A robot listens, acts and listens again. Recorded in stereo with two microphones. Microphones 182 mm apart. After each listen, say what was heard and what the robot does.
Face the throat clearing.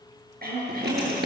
The throat clearing: about 55° right or 125° right. Turn 55° right.
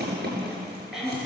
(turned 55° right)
Found it: throat clearing, straight ahead.